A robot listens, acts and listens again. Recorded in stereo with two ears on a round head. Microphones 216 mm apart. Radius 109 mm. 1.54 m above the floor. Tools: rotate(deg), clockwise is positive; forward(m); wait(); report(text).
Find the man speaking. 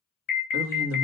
rotate(60)
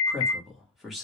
report("Found it: a man speaking, straight ahead.")